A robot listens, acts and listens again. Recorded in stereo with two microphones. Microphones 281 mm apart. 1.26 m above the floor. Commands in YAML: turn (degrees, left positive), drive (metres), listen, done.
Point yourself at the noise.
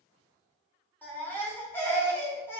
turn: 30
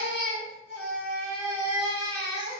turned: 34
turn: 135
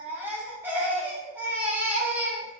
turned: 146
turn: -10
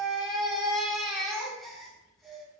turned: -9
done: "Found it: a baby crying, straight ahead."